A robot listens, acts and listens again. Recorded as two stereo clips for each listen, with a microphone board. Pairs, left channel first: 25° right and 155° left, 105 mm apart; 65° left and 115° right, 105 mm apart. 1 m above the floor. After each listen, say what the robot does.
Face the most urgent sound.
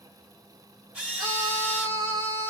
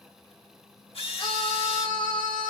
Turn 120° left.
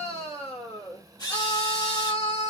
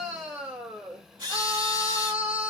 Turn 25° right.
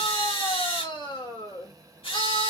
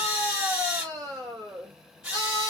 Turn 10° left.
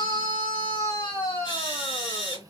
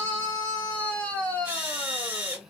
Facing the scream.